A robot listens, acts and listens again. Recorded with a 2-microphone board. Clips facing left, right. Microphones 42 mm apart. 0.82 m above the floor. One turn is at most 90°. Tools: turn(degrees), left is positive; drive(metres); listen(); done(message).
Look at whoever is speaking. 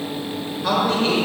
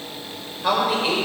turn(degrees=-30)
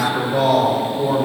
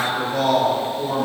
turn(degrees=20)
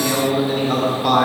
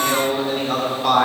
done("Found it: a man speaking, straight ahead, 2 to 4 m away.")